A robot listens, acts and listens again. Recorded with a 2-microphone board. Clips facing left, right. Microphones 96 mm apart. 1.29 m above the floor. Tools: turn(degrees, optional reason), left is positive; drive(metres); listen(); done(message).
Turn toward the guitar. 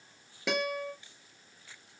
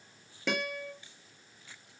turn(degrees=30)
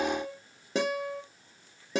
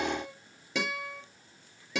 turn(degrees=140, reason="So it is at 140° left.")
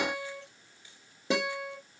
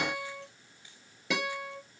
turn(degrees=30, reason="The guitar is now 30° left.")
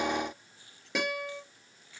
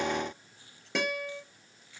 done("Facing the guitar, 2 to 4 m away.")